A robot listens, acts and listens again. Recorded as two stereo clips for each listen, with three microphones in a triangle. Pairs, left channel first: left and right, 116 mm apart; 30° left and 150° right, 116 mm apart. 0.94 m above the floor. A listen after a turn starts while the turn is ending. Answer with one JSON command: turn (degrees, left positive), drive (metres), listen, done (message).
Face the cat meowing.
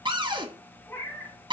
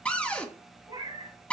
{"turn": 165}
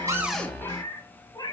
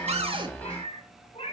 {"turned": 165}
{"turn": 40}
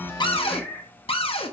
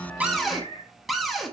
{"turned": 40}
{"turn": 15}
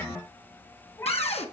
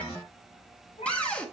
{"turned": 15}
{"turn": 25}
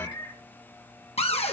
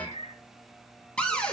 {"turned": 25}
{"turn": 35}
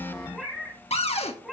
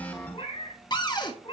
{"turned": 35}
{"done": "Found it: a cat meowing, straight ahead."}